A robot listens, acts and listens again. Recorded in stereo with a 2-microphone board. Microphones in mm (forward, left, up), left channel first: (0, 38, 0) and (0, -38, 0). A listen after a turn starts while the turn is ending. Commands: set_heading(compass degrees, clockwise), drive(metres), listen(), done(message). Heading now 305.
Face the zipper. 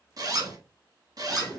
set_heading(0)
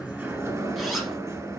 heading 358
listen()
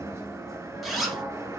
done("Facing the zipper, 1 to 2 m away.")